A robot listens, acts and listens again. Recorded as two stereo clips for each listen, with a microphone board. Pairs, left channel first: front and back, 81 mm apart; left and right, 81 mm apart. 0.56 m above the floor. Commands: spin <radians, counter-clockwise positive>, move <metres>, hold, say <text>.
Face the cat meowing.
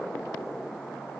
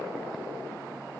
hold
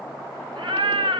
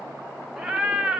spin -2.97
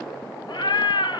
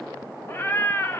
spin 0.44
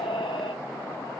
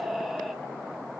say Found it: a cat meowing, straight ahead.